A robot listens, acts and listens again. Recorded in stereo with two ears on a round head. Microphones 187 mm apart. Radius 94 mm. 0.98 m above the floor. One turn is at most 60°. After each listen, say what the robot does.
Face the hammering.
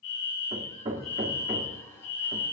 Turn 30° right.
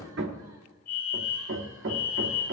Turn 60° right.
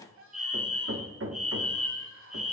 Turn 60° right.
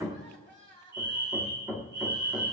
Turn 15° right.
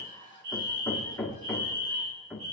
Found it: hammering, straight ahead, 1 to 2 m away.